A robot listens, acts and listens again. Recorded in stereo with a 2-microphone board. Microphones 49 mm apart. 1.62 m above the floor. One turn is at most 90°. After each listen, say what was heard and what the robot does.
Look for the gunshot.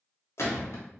The gunshot: about 70° left or 110° left. Turn 70° left.
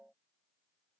Keep listening.
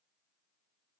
I heard a gunshot, but can't make it out now. It was about straight ahead or 40° left.